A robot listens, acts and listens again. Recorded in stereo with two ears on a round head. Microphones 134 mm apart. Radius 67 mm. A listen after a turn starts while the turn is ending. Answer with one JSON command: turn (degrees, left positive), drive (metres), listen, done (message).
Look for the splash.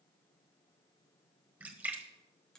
{"turn": -30}
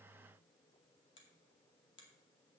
{"listen": true}
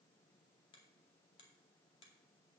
{"done": "I heard a splash, but can't make it out now. It was about 15° left or 135° right."}